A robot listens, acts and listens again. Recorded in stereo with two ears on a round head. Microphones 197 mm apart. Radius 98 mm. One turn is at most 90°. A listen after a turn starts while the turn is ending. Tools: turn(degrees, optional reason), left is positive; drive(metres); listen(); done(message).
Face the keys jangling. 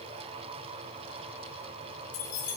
turn(degrees=90)
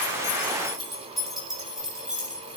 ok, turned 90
done("Facing the keys jangling, over 4 m away.")